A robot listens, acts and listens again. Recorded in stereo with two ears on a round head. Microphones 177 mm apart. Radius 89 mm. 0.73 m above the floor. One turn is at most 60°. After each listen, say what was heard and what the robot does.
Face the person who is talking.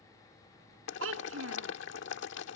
Turn 60° right.
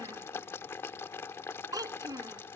So it is at 20° right. Turn 20° right.
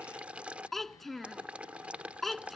Facing the child speaking.